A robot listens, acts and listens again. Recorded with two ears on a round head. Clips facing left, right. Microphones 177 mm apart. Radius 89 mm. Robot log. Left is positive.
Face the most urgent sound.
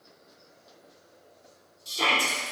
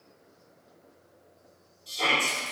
note: The shout: about 55° left or 125° left.
cmd yaw +55
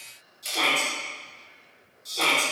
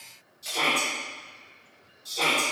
end: Facing the shout, 1 to 2 m away.